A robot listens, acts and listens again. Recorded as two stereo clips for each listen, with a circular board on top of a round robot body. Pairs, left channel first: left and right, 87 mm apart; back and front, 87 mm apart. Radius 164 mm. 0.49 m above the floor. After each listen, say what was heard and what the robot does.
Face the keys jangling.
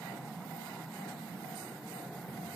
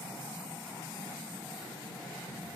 Keep listening.
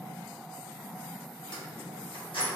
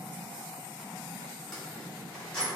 The keys jangling: 105° left. Turn 105° left.
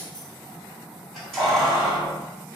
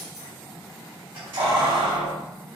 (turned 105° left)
Found it: keys jangling, straight ahead.